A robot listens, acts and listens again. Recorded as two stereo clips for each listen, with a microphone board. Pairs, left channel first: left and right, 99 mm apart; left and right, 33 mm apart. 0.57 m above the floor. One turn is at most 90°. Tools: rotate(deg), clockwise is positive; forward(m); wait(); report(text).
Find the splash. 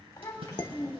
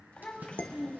rotate(70)
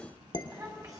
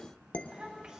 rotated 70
wait()
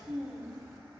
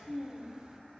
report("I heard a splash, but can't make it out now. It was about straight ahead or 40° right.")